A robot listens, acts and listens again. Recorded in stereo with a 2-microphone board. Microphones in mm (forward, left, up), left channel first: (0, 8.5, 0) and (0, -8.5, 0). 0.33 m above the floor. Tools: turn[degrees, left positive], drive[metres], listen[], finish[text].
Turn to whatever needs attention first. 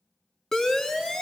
Thought: The siren: about 30° left or 150° left.
Action: turn[30]
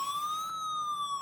Action: finish[Facing the siren, 2 to 4 m away.]